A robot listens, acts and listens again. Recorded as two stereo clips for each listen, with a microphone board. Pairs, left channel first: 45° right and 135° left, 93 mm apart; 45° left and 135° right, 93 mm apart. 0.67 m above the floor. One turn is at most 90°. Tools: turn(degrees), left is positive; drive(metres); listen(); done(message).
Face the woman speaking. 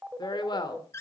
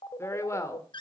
turn(degrees=-10)
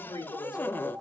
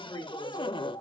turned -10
done("Facing the woman speaking, 2 to 4 m away.")